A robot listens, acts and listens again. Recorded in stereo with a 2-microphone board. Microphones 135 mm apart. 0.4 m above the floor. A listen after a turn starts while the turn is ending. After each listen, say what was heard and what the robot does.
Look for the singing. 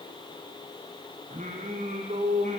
The singing: about 65° right or 115° right. Turn 65° right.
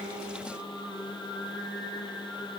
Found it: singing, straight ahead, over 4 m away.